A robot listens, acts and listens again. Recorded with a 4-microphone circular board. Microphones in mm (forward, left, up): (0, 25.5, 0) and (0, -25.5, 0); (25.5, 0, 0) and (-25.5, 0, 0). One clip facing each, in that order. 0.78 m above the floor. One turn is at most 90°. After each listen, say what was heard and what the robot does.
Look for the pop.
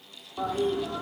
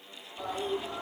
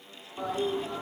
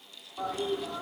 Keep listening.
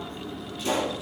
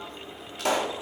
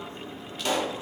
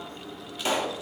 The pop: 100° right. Turn 90° right.
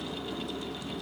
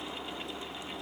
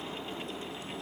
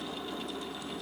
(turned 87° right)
Nothing new. It was at 15° right. Turn 15° right.
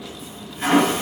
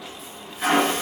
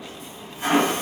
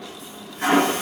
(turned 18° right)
Facing where the pop came from. I can't hear it now.